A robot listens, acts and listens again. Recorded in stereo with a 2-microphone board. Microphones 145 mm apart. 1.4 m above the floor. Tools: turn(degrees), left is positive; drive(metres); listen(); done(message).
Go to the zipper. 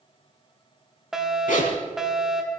turn(degrees=70)
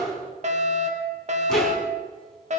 listen()
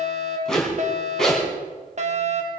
drive(metres=1.0)
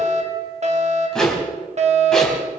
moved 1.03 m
drive(metres=1.0)
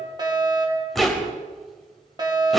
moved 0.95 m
drive(metres=1.0)
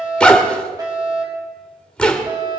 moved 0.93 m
turn(degrees=10)
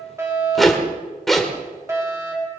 drive(metres=1.0)
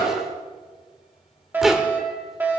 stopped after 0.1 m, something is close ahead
done("Arrived at the zipper, straight ahead.")